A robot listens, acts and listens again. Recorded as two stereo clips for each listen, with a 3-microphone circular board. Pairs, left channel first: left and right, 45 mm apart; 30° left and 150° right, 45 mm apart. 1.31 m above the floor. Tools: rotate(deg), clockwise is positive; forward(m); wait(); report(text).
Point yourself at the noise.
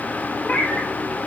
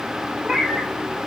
rotate(-135)
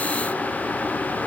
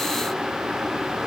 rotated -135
wait()
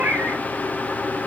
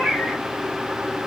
rotate(45)
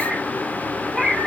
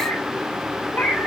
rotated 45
report("Found it: a cat meowing, straight ahead.")